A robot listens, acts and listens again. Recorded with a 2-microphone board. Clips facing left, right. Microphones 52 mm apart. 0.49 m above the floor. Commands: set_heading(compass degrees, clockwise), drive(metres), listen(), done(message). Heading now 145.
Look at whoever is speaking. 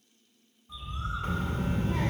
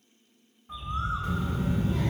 set_heading(95)
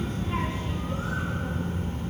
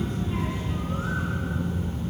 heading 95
set_heading(35)
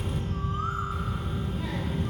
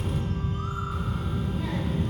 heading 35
done("Facing the child speaking.")